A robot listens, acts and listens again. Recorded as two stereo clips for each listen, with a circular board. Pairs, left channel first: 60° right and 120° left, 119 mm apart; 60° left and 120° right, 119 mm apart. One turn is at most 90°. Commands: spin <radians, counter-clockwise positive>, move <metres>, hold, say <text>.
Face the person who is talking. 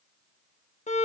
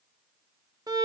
hold
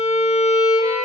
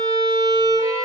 hold
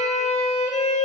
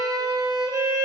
say I can't make out anyone speaking, only a violin.